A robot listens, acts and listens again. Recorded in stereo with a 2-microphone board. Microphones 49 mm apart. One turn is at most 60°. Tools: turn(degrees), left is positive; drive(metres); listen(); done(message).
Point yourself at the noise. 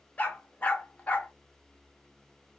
turn(degrees=35)
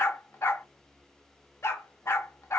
turn(degrees=60)
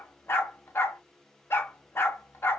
turn(degrees=60)
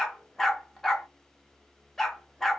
done("Found it: a dog barking, straight ahead.")